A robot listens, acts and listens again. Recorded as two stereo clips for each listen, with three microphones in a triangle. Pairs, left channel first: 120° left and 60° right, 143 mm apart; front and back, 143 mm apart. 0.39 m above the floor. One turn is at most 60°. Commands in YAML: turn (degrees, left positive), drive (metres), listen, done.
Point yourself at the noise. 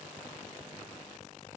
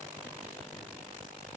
listen: true
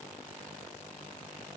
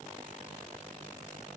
listen: true
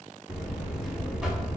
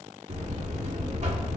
turn: -60
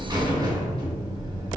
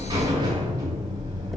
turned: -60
turn: -60
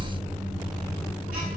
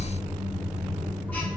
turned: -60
turn: -60
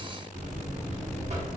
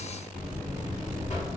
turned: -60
turn: -30
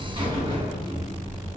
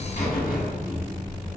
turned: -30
done: "Facing the buzzer."